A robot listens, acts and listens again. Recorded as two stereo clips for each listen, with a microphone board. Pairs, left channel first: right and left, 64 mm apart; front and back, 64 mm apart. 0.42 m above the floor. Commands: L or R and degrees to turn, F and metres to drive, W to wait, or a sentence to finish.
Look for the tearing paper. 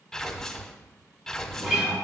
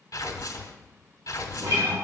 Found it: tearing paper, straight ahead, under 1 m away.